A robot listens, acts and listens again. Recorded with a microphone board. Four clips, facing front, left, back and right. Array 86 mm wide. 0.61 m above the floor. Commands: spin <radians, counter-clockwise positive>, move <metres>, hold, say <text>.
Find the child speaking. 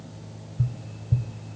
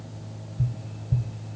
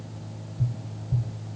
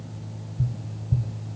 hold
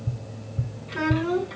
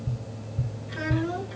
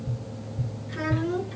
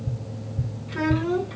spin -0.52
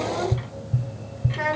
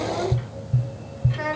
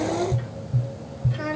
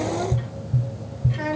spin 0.17
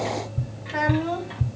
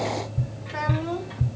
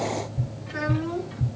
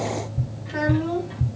say Found it: a child speaking, straight ahead.